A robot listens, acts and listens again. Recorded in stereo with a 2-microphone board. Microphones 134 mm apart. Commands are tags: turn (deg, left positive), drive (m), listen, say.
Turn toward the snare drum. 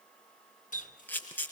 <listen/>
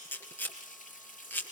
<listen/>
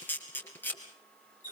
<say>I can't make out a snare drum, only a camera shutter and a running tap.</say>